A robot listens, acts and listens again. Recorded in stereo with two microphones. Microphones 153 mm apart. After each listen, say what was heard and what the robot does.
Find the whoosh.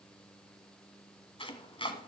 Keep listening.
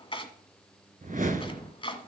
The whoosh: about 65° right or 115° right. Turn 65° right.
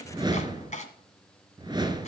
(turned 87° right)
So it is at 30° right. Turn 30° right.
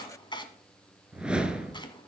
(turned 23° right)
Found it: a whoosh, straight ahead, 1 to 2 m away.